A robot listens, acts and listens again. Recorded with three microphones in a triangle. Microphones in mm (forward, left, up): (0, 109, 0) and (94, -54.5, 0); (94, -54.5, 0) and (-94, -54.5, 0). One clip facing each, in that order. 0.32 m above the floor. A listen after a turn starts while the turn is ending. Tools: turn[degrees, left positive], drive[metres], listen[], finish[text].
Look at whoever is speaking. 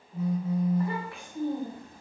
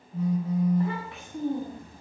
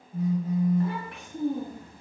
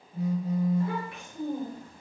Thought: The child speaking: 10° left.
Action: turn[10]
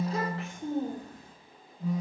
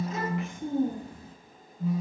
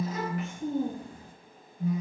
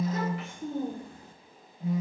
Thought: The child speaking is now 20° left.
Action: turn[20]
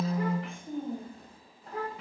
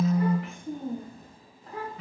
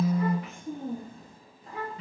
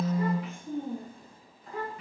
Thought: The child speaking is now 40° left.
Action: turn[40]
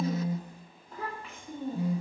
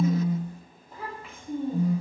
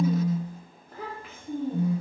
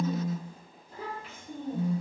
Thought: The child speaking is now 20° left.
Action: turn[20]
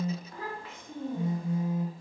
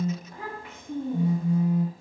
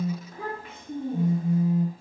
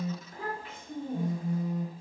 Action: finish[Found it: a child speaking, straight ahead, 1 to 2 m away.]